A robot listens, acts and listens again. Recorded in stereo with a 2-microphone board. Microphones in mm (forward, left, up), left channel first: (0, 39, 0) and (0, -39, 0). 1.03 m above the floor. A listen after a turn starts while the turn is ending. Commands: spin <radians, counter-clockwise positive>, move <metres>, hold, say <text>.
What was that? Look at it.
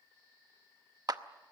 spin -0.87
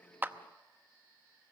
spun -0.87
hold
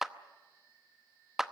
say Facing the clap, under 1 m away.